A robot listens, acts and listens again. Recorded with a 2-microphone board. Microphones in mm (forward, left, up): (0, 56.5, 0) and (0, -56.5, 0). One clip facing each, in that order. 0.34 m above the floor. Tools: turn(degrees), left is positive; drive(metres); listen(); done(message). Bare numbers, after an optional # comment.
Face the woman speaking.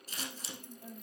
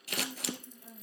# The woman speaking: about 30° left or 150° left.
turn(30)
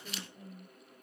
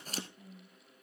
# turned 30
# So it is at 120° left.
turn(120)
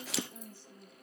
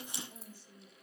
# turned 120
# The woman speaking is now 10° right.
turn(-10)
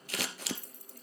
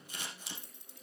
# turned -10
listen()
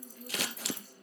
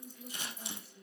done("Facing the woman speaking.")